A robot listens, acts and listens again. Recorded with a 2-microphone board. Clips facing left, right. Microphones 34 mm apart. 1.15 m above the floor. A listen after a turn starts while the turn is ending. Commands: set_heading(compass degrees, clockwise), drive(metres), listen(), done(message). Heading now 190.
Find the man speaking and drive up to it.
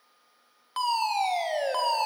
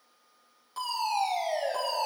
listen()
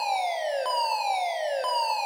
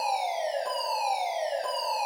listen()
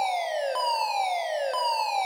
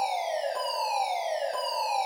done("I can't make out a man speaking to turn to.")